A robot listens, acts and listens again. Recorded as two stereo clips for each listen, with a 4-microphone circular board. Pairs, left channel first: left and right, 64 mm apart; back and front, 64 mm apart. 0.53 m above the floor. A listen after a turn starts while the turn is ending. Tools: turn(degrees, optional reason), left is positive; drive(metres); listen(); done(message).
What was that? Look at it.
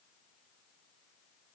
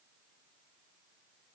listen()
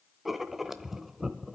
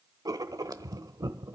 done("Facing the writing.")